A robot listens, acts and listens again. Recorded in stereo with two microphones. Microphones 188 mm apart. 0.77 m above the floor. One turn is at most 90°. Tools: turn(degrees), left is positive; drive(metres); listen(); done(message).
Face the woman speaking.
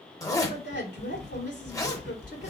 turn(degrees=70)
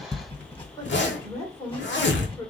turn(degrees=20)
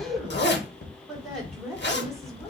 done("Found it: a woman speaking, straight ahead, 1 to 2 m away.")